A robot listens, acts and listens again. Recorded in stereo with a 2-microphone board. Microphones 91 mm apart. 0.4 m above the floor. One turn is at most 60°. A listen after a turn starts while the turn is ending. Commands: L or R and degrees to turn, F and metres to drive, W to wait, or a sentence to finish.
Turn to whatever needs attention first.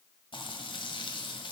W
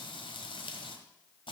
W
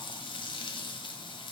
I can't make out anything urgent to turn to.